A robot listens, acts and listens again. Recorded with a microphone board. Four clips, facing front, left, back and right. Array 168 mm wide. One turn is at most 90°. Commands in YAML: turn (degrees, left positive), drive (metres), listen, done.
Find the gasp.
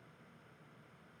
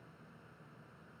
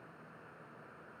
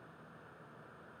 listen: true
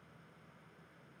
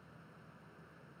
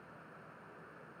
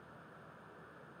listen: true
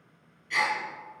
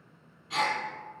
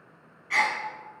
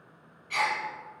turn: 90
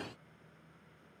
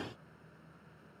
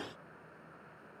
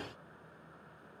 turn: 75
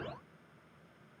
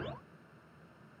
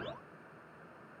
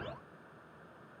done: "Facing where the gasp came from. I can't hear it now."